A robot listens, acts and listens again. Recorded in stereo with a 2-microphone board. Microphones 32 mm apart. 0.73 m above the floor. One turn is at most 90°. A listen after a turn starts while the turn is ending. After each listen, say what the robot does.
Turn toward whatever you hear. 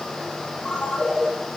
Turn 15° left.
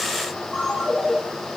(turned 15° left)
Found it: a ringtone, straight ahead, 2 to 4 m away.